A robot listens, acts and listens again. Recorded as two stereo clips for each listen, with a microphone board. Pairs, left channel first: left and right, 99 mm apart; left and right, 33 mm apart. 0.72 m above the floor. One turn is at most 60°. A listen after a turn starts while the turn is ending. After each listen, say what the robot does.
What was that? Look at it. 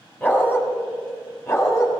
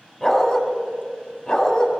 Turn 30° left.
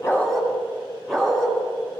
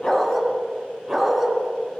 Found it: a dog barking, straight ahead, 2 to 4 m away.